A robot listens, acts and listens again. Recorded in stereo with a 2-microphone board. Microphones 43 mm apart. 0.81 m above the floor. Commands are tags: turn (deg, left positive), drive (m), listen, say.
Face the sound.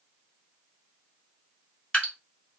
<turn deg="25"/>
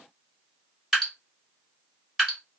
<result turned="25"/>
<say>Facing the dripping, 2 to 4 m away.</say>